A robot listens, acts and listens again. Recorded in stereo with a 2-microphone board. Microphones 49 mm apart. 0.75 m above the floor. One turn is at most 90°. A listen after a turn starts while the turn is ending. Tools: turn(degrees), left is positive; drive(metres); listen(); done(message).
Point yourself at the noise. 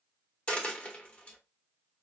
turn(degrees=30)
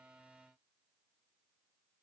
listen()
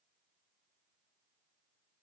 done("I heard a dropped coin, but can't make it out now. It was about straight ahead or 120° left.")